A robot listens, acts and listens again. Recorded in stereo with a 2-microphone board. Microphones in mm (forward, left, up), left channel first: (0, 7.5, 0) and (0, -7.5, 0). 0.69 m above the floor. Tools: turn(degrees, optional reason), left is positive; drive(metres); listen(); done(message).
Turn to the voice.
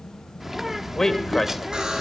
turn(degrees=25, reason="The man speaking: about 25° left or 155° left.")
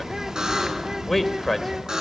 done("Facing the man speaking.")